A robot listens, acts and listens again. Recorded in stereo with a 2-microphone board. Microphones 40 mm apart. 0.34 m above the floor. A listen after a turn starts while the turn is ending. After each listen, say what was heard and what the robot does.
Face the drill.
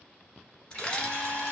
The drill: about 60° left or 120° left. Turn 60° left.
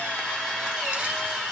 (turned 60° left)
Facing the drill.